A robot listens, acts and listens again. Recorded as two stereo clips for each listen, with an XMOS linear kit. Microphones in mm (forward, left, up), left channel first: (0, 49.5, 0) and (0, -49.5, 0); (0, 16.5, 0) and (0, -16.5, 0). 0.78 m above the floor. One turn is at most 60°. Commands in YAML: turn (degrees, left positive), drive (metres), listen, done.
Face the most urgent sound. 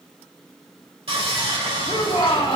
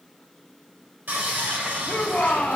turn: 60
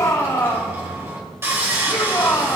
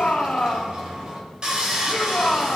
turn: 45
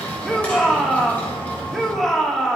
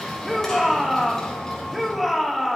done: "Facing the shout, 1 to 2 m away."